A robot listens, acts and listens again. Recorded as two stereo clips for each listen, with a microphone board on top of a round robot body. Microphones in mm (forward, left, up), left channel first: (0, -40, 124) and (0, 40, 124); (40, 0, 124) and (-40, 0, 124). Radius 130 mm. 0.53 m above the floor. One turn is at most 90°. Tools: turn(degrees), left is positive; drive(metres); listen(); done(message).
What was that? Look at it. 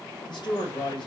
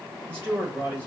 turn(degrees=-90)
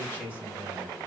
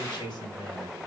turn(degrees=-25)
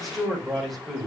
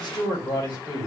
done("Facing the man speaking, 2 to 4 m away.")